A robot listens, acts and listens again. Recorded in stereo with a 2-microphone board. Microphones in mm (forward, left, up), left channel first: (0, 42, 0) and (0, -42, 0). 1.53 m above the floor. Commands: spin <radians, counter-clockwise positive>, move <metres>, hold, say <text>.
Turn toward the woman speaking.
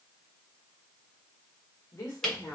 spin 0.70
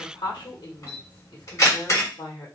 spin 1.66
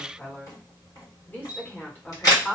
spin 0.35
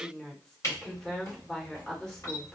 spin 0.17
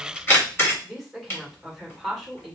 say Facing the woman speaking.